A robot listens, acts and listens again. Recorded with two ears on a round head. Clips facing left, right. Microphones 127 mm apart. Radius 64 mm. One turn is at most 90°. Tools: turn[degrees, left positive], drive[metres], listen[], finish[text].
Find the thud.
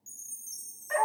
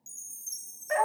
Action: listen[]
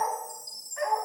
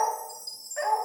Action: listen[]
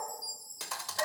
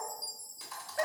Thought: The thud: about 70° left or 110° left.
Action: turn[70]
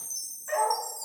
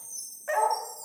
Action: listen[]
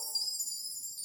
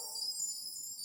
Action: finish[I heard a thud, but can't make it out now. It was about straight ahead or 40° left.]